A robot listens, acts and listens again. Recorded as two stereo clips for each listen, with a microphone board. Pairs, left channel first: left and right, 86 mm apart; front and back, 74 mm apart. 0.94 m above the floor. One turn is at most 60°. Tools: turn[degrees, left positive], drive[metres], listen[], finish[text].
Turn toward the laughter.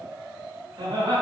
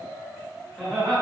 Thought: The laughter: 80° right.
Action: turn[-60]
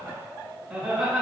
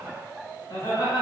Action: finish[Found it: laughter, straight ahead.]